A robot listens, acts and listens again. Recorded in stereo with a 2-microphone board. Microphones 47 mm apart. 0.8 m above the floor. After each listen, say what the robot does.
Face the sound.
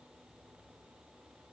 Keep listening.
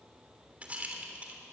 Turn 25° right.
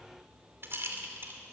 Turn 125° right.
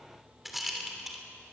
Facing the rattle.